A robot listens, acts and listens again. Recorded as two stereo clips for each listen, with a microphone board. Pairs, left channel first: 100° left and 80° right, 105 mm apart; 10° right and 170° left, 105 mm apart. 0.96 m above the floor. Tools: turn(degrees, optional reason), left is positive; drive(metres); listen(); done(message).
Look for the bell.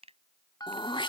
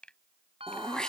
turn(degrees=150, reason="The bell: 150° left.")
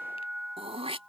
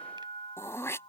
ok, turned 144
done("Facing the bell.")